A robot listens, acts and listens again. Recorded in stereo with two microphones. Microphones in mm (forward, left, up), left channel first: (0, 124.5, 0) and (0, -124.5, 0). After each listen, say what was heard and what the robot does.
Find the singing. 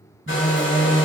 The singing: about 70° right or 110° right. Turn 70° right.
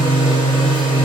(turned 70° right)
So it is at 20° right. Turn 20° right.
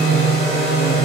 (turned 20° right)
The singing is now 15° right. Turn 15° right.
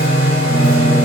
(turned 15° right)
The singing is now 15° right. Turn 15° right.
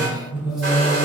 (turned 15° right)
The singing is now 10° right. Turn 10° right.
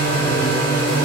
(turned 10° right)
Facing the singing, 1 to 2 m away.